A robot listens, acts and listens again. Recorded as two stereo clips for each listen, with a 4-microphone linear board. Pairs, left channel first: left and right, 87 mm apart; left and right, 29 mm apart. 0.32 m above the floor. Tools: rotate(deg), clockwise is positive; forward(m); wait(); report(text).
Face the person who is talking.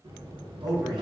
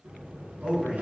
rotate(45)
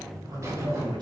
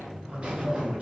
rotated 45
wait()
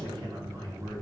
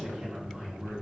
wait()
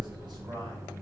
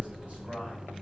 report("I heard a man speaking, but can't make it out now. It was about straight ahead or 90° right.")